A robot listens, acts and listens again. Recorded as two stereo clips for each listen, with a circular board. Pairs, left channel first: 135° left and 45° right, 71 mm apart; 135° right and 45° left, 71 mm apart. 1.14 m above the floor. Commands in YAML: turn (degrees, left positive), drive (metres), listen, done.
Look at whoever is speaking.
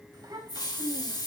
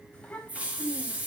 turn: -60
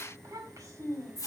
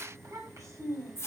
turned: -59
done: "Found it: a child speaking, straight ahead, over 4 m away."